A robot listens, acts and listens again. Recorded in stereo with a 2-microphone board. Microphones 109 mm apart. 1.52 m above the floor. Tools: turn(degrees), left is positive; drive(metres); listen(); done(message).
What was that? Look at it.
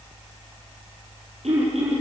turn(degrees=-90)
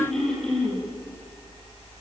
done("Found it: throat clearing, straight ahead.")